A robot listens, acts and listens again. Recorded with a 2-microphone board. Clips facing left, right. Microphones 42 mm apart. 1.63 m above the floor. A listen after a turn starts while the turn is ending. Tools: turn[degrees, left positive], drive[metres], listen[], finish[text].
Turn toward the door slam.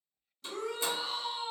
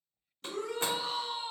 Thought: The door slam: about 50° right or 130° right.
Action: turn[-50]
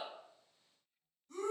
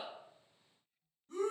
Action: listen[]
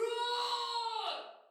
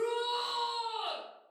Action: finish[I heard a door slam, but can't make it out now. It was about straight ahead or 80° right.]